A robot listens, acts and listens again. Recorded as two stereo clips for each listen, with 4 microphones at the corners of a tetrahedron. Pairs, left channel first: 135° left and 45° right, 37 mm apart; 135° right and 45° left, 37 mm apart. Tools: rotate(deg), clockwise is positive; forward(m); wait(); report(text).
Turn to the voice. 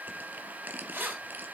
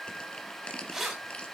wait()
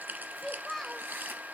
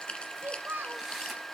rotate(-50)
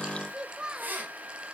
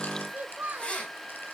rotate(-15)
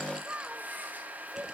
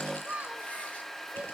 report("Facing the child speaking.")